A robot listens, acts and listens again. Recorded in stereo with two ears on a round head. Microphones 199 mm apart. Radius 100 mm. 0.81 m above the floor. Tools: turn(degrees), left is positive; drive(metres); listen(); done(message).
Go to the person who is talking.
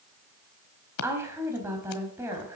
turn(degrees=-30)
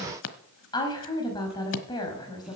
turn(degrees=20)
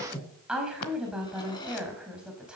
drive(metres=1.0)
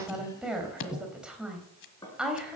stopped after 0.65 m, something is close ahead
done("Blocked. The woman speaking is further on, straight ahead.")